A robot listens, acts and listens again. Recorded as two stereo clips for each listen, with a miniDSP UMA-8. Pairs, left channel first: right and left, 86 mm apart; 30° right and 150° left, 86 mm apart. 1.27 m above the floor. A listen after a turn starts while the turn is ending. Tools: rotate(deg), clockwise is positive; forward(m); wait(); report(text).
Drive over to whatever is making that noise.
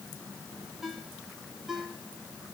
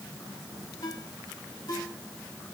forward(1.0)
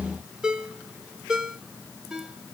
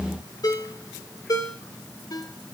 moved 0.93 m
rotate(-10)
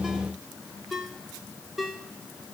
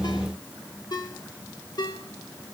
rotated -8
forward(1.0)
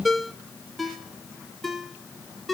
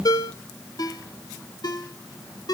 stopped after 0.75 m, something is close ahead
report("I am next to the ringtone.")